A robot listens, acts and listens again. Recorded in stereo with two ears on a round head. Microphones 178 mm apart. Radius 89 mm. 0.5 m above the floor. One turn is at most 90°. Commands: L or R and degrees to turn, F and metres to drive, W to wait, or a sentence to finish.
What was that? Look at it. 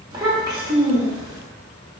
R20
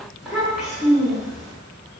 Facing the child speaking.